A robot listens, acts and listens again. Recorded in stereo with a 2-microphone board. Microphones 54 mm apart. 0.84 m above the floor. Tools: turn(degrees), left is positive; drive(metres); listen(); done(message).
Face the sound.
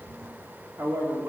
turn(degrees=-70)
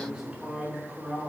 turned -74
turn(degrees=-10)
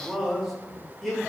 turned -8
done("Facing the man speaking, 2 to 4 m away.")